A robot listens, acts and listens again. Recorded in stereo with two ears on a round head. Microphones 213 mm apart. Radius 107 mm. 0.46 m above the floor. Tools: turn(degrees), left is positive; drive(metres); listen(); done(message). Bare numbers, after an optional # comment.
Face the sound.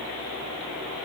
listen()
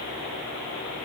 listen()
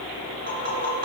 # The tapping: about 35° right or 145° right.
turn(-35)
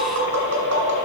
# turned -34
# So it is at 105° right.
turn(-105)
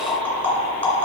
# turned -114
# The tapping is now 10° left.
turn(10)
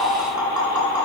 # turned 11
done("Facing the tapping, 2 to 4 m away.")